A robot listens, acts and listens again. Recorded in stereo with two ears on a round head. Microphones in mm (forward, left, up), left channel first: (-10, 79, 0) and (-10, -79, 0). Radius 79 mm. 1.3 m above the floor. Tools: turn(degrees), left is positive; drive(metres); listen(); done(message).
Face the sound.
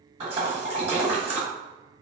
turn(degrees=-35)
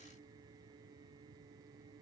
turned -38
listen()
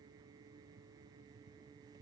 done("I heard a splash, but can't make it out now. It was about straight ahead or 105° right.")